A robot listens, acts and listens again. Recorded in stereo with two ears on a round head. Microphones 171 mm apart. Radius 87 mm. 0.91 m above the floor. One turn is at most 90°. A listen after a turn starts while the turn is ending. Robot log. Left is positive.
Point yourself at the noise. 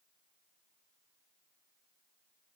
cmd idle
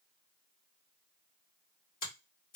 note: The finger snap: about 50° left or 130° left.
cmd yaw +50
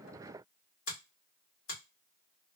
note: So it is at 80° left.
cmd yaw +80
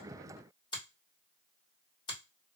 note: The finger snap is now 25° left.
cmd yaw +25
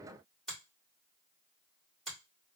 end: Found it: a finger snap, straight ahead.